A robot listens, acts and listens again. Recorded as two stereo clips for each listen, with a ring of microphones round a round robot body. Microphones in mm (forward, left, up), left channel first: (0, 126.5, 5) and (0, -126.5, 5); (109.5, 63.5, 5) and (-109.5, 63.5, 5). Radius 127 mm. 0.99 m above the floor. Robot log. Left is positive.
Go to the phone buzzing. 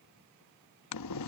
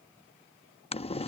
cmd idle
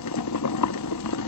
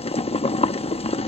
cmd idle
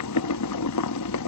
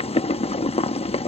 end: I can't make out a phone buzzing to turn to.